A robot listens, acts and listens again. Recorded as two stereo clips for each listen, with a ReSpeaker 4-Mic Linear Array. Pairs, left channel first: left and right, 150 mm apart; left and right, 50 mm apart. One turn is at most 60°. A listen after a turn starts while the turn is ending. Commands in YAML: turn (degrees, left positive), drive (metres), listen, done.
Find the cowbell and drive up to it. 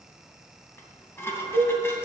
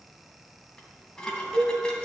turn: -30
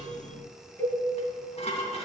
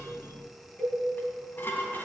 turn: 15
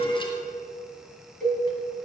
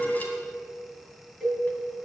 drive: 1.0
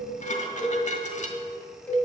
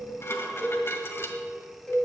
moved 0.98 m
turn: 10
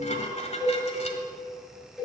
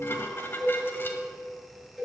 drive: 1.0
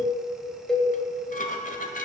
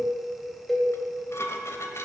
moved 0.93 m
drive: 1.0
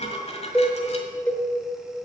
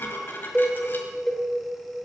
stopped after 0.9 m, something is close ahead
turn: 15
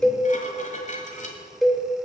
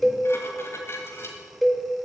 done: "I am next to the cowbell."